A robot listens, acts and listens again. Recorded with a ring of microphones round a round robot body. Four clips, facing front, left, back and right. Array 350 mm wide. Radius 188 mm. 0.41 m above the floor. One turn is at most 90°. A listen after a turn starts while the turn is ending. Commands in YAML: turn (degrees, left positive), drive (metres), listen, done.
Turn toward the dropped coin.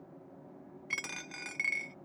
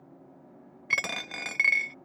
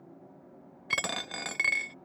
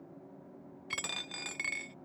turn: 90
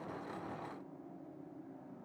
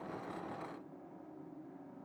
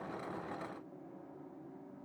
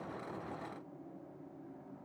turn: 55
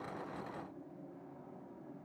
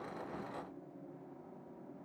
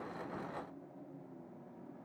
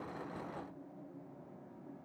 done: "I heard a dropped coin from this way, but can't make it out now."